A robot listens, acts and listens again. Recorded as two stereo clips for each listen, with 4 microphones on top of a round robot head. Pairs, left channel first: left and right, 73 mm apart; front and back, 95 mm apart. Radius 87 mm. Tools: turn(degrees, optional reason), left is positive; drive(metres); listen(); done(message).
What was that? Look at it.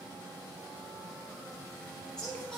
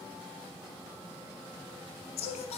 turn(degrees=10, reason="The singing: 10° left.")
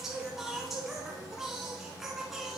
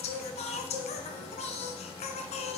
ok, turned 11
done("Found it: singing, straight ahead, 1 to 2 m away.")